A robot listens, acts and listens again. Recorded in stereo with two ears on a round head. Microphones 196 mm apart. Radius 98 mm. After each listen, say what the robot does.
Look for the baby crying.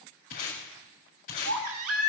Turn 75° right.
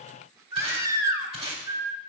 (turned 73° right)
Turn 15° right.
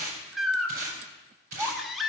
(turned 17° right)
Found it: a baby crying, straight ahead.